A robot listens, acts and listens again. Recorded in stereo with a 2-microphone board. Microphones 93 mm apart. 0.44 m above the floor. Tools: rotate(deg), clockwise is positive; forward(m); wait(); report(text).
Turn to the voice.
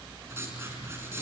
wait()
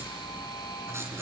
wait()
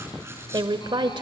rotate(55)
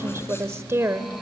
rotate(35)
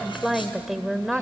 report("Facing the woman speaking.")